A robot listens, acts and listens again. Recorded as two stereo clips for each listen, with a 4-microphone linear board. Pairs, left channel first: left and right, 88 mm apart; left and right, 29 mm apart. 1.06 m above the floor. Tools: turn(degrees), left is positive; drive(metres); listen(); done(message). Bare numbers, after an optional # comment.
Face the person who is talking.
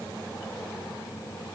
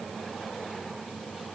listen()
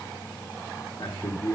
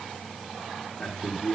# The man speaking: about 40° left or 140° left.
turn(40)
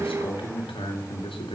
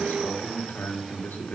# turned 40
# So it is at 95° left.
turn(95)
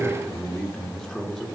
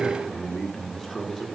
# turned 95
# The man speaking is now 10° left.
turn(10)
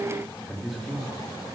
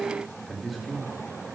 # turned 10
done("Facing the man speaking, 2 to 4 m away.")